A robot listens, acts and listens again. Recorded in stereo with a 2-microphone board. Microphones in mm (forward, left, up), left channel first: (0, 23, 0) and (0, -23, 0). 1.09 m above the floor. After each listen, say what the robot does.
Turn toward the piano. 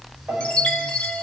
Turn 45° right.
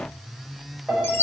Facing the piano.